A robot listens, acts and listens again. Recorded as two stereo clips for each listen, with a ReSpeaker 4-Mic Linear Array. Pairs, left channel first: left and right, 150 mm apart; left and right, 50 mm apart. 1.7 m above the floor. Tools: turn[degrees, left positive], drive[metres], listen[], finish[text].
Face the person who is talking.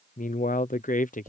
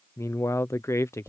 Thought: The man speaking: about 60° left or 120° left.
Action: turn[60]
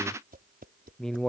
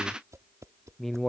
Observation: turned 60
Action: finish[Facing the man speaking.]